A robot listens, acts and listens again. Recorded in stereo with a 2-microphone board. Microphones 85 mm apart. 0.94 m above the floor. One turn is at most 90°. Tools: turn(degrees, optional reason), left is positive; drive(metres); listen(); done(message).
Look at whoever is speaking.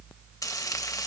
listen()
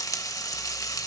listen()
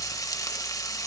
done("I can't make out anyone speaking, only frying.")